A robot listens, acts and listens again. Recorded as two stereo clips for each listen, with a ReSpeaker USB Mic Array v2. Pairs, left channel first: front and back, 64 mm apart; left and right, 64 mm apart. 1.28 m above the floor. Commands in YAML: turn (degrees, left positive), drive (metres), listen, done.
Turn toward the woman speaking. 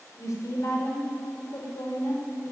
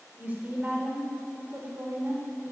turn: -40
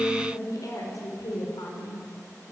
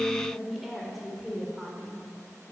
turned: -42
turn: -10
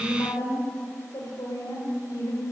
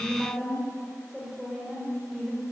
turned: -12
done: "Found it: a woman speaking, straight ahead."